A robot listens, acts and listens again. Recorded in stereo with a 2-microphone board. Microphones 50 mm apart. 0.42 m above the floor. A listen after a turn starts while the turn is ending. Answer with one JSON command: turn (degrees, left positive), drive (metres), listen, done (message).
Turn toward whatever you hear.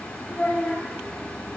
{"turn": 35}
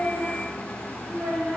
{"turn": -10}
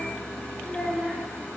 {"done": "Found it: a child speaking, straight ahead, 2 to 4 m away."}